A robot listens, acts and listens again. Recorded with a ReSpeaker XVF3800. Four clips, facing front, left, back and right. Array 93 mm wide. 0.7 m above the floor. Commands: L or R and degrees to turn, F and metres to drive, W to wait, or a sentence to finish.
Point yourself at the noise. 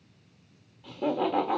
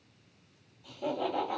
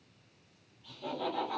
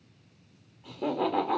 R40
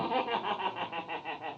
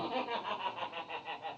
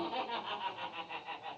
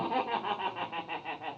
R45
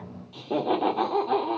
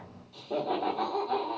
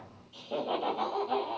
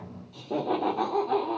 R20
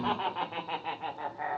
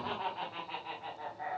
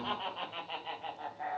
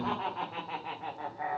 R25
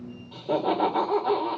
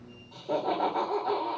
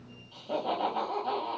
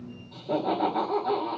L10
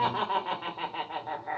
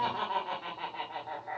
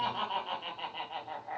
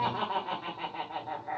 Facing the laughter.